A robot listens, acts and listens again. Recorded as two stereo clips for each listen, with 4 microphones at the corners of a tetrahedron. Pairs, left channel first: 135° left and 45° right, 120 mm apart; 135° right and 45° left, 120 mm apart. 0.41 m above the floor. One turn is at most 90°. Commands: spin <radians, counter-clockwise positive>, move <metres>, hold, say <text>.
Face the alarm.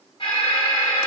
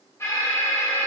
spin 1.57
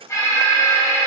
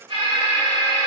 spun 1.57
spin 1.31
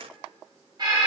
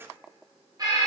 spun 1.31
say Found it: an alarm, straight ahead, 1 to 2 m away.